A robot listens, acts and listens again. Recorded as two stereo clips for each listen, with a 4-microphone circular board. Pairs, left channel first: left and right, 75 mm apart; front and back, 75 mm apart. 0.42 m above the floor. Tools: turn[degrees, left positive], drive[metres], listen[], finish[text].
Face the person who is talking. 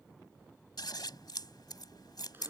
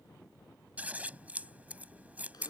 Action: listen[]
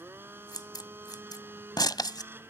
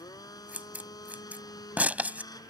Action: listen[]
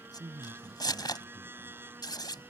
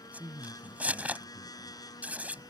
Thought: The man speaking: 125° right.
Action: turn[-125]
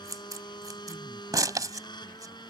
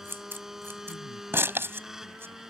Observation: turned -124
Action: listen[]
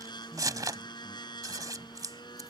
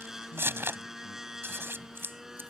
Action: listen[]
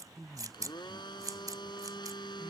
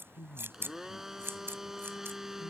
Action: finish[Facing the man speaking.]